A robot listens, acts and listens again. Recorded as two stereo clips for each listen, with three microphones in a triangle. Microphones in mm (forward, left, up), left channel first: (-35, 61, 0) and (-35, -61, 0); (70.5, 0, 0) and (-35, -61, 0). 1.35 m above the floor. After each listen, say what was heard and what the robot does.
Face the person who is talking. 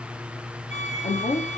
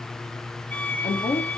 The woman speaking: 65° left. Turn 65° left.
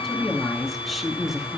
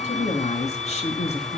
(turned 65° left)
Facing the woman speaking, 2 to 4 m away.